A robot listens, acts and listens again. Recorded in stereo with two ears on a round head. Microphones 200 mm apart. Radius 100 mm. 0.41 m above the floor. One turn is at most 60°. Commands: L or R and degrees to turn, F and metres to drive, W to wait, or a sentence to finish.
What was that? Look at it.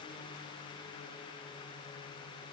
W
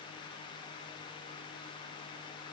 W
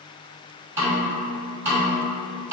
R30
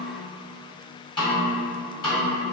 L20
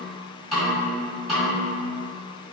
Found it: a snare drum, straight ahead.